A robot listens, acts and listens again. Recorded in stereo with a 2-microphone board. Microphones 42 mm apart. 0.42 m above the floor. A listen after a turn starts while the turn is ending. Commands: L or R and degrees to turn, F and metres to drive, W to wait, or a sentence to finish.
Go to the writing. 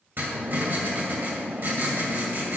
R50
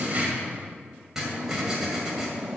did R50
R10
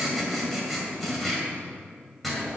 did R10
F1.0
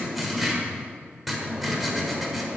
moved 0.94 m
F1.0
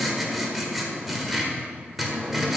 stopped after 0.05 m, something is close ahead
I am next to the writing.